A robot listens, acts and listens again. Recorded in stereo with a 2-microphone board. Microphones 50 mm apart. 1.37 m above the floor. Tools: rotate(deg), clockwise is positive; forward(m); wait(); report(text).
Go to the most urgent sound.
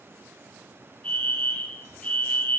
rotate(-30)
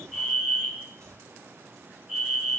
rotate(20)
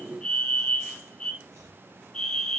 forward(1.0)
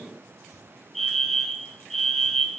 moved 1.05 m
forward(1.0)
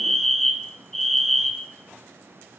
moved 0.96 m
forward(1.0)
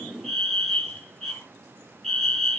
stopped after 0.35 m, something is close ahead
report("Arrived at the fire alarm, straight ahead.")